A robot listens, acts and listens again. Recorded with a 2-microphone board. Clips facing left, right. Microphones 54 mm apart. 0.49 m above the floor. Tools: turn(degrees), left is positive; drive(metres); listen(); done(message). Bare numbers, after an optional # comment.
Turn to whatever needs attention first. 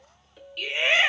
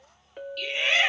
# The shout: about 20° left or 160° left.
turn(20)
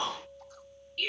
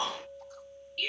done("Facing the shout, 2 to 4 m away.")